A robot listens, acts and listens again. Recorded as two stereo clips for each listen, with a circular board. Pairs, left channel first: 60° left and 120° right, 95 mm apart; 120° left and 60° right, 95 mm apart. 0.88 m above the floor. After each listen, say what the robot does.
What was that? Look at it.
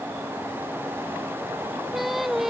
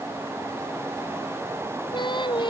Turn 155° left.
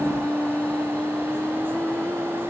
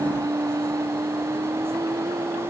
Turn 15° right.
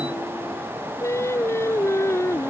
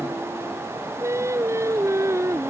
Found it: singing, straight ahead.